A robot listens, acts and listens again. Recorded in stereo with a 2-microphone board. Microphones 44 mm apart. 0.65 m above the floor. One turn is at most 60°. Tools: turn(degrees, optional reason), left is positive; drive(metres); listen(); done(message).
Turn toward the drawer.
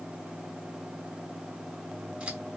listen()
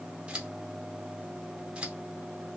listen()
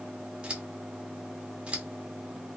done("I can't make out a drawer to turn to.")